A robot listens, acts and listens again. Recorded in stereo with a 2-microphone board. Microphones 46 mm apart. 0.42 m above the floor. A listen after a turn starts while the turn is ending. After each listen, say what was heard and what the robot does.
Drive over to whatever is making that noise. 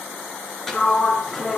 Turn 30° left.
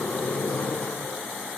So it is at 145° left. Turn 145° left.
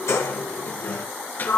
The sliding door is now 45° left. Turn 45° left.
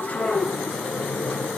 The sliding door is now 10° left. Turn 10° left.
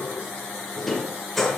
Drive 1.0 m forward.
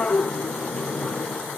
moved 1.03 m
The sliding door is now 15° left. Turn 15° left.
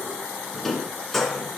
Drive 1.0 m forward.
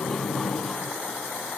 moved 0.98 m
Drive 1.0 m forward.
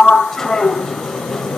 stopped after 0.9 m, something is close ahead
The sliding door is now 10° left. Turn 10° left.
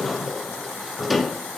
I am next to the sliding door.